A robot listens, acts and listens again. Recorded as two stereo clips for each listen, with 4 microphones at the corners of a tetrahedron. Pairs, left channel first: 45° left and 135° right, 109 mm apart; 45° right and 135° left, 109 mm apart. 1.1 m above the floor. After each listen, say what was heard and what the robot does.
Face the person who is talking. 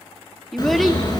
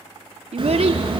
The child speaking: 130° left. Turn 130° left.
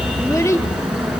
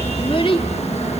The child speaking is now 15° right. Turn 15° right.
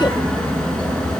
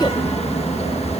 Keep listening.
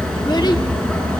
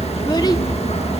Keep listening.
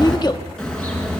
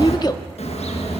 I heard a child speaking from this way, but can't make it out now.